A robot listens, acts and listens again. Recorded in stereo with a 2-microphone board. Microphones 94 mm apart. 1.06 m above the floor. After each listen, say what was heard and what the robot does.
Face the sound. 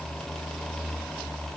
Keep listening.
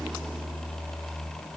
Keep listening.
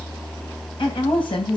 The woman speaking: about 60° left or 120° left. Turn 60° left.
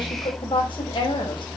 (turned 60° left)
So it is at 60° left. Turn 60° left.
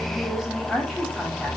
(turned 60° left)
Keep listening.
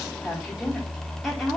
Keep listening.
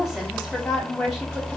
Found it: a woman speaking, straight ahead, over 4 m away.